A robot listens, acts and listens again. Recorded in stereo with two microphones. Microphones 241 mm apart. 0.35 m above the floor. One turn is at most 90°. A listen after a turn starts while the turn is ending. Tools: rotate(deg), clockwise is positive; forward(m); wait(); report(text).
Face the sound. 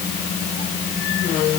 wait()
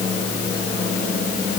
wait()
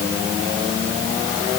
report("I can't make out anything.")